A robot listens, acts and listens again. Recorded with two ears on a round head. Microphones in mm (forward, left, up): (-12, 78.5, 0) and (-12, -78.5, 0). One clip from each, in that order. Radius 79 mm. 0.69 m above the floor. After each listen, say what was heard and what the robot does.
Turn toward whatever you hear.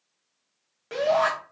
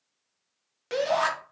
The shout: about 50° right or 130° right. Turn 50° right.
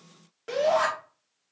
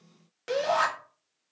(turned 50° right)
So it is at 65° right. Turn 65° right.
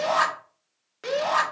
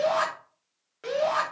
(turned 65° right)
The shout is now 25° left. Turn 25° left.
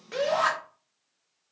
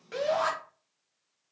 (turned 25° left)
The shout is now 15° left. Turn 15° left.
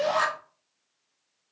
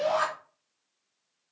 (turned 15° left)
Facing the shout, 1 to 2 m away.